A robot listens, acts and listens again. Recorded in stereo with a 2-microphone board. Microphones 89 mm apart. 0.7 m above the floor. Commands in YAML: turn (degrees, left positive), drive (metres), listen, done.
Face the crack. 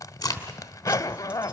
turn: 40
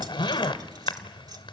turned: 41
listen: true
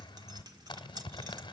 done: "I heard a crack, but can't make it out now. It was about straight ahead or 100° left."